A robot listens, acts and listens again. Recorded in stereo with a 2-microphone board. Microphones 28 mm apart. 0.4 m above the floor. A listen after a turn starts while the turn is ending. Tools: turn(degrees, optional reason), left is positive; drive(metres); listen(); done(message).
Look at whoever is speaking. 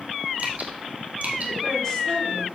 listen()
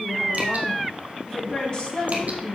turn(degrees=35, reason="The woman speaking: about 35° left or 145° left.")
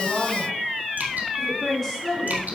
turn(degrees=10, reason="So it is at 10° left.")
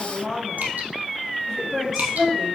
done("Found it: a woman speaking, straight ahead, over 4 m away.")